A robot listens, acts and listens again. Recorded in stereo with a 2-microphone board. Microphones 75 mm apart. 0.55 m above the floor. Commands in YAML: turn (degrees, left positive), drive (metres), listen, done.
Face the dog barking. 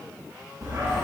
turn: -50
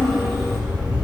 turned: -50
done: "Facing the dog barking, 2 to 4 m away."